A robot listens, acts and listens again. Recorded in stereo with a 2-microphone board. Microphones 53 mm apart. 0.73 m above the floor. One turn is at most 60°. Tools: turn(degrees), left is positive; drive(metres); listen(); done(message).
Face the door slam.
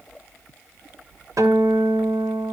listen()
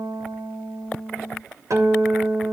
listen()
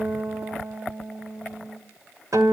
done("I can't make out a door slam, only a guitar.")